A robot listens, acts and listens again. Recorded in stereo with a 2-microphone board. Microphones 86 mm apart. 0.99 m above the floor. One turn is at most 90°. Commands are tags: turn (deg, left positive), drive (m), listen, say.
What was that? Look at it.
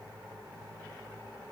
<listen/>
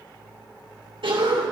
<turn deg="-90"/>
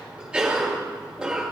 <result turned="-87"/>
<turn deg="-10"/>
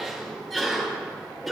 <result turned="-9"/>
<say>Found it: a cough, straight ahead.</say>